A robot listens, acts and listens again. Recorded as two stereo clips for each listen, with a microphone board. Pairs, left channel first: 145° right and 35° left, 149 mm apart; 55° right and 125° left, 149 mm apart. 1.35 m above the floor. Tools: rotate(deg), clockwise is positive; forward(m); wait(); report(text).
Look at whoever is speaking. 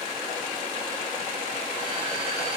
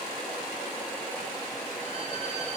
wait()
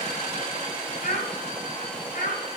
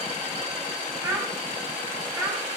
rotate(175)
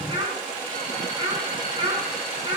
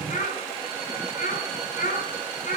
rotate(25)
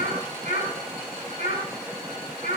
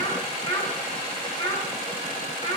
report("Facing the child speaking.")